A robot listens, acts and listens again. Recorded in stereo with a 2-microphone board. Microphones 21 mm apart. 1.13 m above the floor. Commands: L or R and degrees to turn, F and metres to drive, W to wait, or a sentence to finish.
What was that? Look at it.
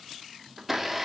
R30
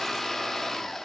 L15
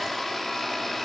Found it: a blender, straight ahead.